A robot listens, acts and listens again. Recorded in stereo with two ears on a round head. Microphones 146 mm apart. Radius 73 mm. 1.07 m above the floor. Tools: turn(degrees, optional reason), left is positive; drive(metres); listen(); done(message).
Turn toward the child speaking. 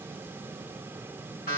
listen()
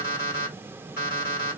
listen()
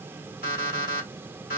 done("I can't make out a child speaking, only an alarm clock.")